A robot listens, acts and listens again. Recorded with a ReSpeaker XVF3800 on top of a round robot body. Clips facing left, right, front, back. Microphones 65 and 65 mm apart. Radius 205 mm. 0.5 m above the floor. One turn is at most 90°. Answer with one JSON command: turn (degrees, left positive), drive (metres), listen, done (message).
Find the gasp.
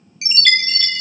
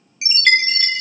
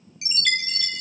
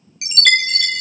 {"listen": true}
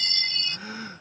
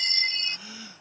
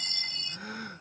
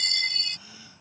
{"turn": 40}
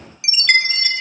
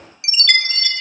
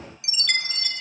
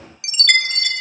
{"done": "I heard a gasp from this way, but can't make it out now."}